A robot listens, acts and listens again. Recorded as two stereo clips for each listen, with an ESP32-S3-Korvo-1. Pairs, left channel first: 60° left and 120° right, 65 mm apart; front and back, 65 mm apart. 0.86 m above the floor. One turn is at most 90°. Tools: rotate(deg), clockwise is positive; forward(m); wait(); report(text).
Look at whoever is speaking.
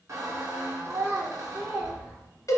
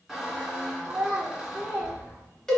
rotate(90)
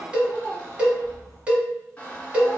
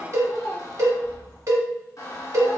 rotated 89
rotate(85)
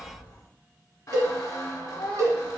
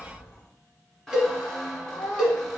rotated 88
report("Found it: a child speaking, straight ahead.")